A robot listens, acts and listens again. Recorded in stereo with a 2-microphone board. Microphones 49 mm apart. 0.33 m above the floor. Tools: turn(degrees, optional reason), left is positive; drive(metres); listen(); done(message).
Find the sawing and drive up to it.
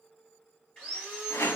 turn(degrees=20, reason="The sawing: about 20° left or 160° left.")
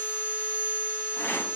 turn(degrees=140, reason="So it is at 140° left.")
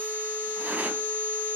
turn(degrees=40, reason="The sawing is now 40° left.")
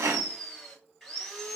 drive(metres=1.0)
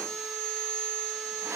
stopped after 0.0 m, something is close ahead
done("Blocked. The sawing is further on, straight ahead.")